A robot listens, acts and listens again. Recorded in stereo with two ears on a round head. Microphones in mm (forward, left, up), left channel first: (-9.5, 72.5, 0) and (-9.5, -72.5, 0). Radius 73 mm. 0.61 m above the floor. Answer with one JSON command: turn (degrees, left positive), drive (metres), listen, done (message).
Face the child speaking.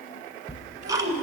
{"turn": -50}
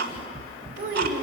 {"turn": -75}
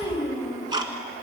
{"turn": -20}
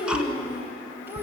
{"turn": -15}
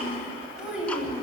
{"done": "Found it: a child speaking, straight ahead, 2 to 4 m away."}